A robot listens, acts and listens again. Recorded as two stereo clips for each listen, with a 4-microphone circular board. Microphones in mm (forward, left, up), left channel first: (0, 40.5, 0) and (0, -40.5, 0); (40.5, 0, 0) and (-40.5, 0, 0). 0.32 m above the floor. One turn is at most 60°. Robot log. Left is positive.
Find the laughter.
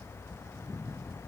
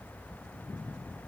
cmd idle
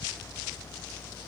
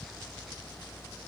cmd idle
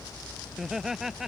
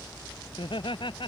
end: Found it: laughter, straight ahead.